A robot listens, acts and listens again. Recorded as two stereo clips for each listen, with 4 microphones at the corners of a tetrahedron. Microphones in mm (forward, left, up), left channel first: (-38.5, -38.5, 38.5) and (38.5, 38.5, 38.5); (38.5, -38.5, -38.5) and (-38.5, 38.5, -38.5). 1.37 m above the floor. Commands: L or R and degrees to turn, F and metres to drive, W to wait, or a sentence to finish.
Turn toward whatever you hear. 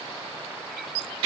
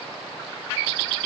W
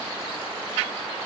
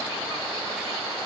W
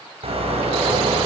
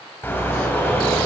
L25
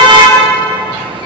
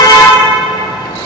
Facing the car horn.